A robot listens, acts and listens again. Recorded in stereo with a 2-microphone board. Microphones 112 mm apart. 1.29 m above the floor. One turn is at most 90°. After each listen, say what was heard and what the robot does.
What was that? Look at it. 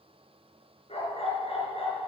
The dog barking: about 70° left or 110° left. Turn 70° left.
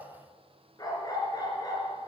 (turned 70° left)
So it is at 40° left. Turn 40° left.
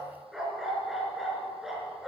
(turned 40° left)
Facing the dog barking.